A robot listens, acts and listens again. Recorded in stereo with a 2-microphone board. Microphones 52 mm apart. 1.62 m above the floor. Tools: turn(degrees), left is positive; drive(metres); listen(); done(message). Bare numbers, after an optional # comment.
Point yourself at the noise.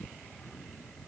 listen()
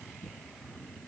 listen()
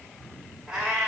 turn(-30)
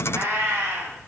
# So it is at 135° right.
turn(-135)
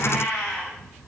# The cat meowing is now 10° left.
turn(10)
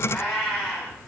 done("Found it: a cat meowing, straight ahead, over 4 m away.")